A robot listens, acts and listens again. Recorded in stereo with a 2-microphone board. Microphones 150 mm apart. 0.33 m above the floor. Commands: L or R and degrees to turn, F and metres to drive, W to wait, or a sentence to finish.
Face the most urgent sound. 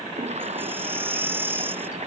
R30
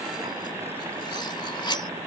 W
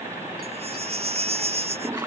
R135
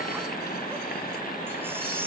R15
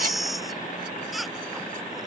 Facing the baby crying.